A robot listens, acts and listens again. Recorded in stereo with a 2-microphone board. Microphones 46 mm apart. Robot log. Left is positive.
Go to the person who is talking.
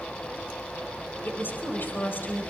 note: The woman speaking: about 45° left or 135° left.
cmd yaw +45
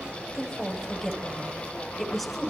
cmd fwd 1.0
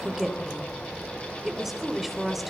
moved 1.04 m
cmd fwd 1.0
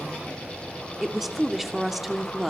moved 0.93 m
cmd fwd 1.0
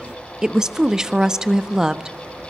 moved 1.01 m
note: The woman speaking is now 15° right.
cmd yaw -15
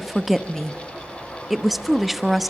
cmd fwd 1.0
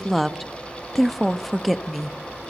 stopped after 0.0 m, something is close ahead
end: I am next to the woman speaking.